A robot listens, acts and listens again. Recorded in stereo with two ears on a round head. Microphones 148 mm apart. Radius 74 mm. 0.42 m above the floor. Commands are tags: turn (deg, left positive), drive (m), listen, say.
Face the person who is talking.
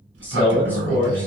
<turn deg="30"/>
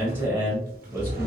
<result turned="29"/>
<turn deg="-15"/>
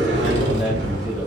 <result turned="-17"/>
<listen/>
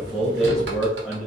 <say>Found it: a man speaking, straight ahead, 1 to 2 m away.</say>